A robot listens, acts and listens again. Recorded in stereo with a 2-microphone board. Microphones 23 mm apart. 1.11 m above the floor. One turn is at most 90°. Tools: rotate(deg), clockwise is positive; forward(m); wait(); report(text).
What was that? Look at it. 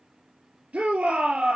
rotate(90)
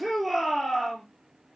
report("Found it: a shout, straight ahead.")